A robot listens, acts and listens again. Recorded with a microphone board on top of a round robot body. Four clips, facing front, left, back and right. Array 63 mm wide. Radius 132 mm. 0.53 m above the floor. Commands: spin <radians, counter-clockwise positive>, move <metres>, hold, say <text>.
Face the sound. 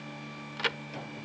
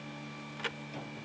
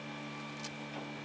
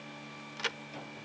spin -0.17
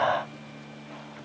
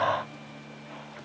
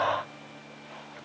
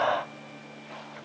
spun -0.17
say Facing where the crack came from. I can't hear it now.